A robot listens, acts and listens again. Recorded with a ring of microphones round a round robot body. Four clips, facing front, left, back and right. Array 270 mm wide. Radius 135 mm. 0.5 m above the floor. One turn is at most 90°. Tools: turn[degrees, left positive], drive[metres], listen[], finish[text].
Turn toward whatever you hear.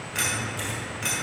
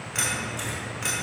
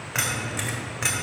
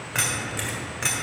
Thought: The keys jangling: 160° right.
Action: turn[-90]
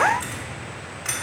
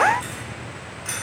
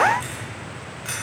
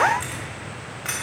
Thought: The keys jangling is now 75° right.
Action: turn[-75]
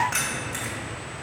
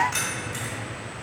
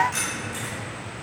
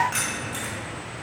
Thought: The keys jangling is now 30° right.
Action: turn[-30]
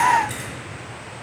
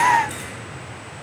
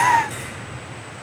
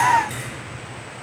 Thought: The keys jangling is now 10° right.
Action: turn[-10]
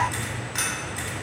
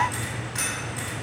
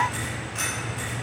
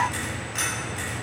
Action: finish[Found it: keys jangling, straight ahead.]